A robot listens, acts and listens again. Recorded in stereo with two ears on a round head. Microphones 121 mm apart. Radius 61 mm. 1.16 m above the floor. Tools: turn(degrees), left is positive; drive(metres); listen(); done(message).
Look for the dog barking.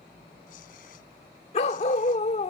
turn(degrees=50)
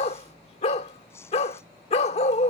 turn(degrees=65)
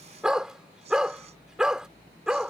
done("Found it: a dog barking, straight ahead.")